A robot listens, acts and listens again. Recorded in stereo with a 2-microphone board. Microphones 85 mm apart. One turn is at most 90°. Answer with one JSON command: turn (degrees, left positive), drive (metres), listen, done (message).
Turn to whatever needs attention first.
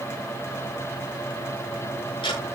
{"listen": true}
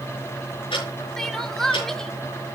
{"turn": 30}
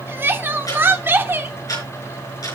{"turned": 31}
{"turn": -25}
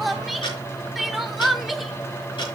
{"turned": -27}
{"done": "Facing the crying, 1 to 2 m away."}